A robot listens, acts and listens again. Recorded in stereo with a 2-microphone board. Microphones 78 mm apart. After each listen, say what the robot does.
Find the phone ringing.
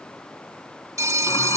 Turn 45° right.
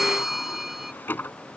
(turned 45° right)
Found it: a phone ringing, straight ahead.